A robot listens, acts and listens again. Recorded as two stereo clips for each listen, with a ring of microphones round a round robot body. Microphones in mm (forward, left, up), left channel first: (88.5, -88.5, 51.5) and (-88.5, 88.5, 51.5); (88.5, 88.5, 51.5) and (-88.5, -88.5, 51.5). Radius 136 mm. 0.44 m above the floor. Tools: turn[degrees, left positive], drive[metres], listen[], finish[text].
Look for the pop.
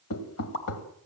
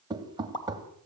Thought: The pop: 25° right.
Action: turn[-25]
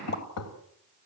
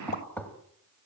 Action: finish[Facing where the pop came from. I can't hear it now.]